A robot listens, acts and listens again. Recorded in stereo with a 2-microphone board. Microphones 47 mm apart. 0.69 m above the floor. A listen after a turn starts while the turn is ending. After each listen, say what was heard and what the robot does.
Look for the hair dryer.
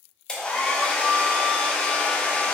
The hair dryer: about 20° left or 160° left. Turn 20° left.
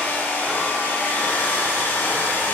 So it is at 135° left. Turn 135° left.
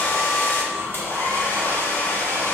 The hair dryer is now 60° left. Turn 60° left.
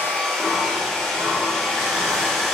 The hair dryer is now 15° left. Turn 15° left.
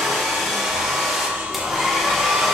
Found it: a hair dryer, straight ahead, under 1 m away.